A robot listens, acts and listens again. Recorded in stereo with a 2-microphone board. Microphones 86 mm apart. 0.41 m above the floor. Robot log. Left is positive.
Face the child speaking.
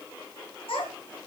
cmd yaw +90
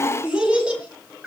note: So it is at 10° right.
cmd yaw -10
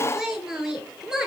end: Found it: a child speaking, straight ahead.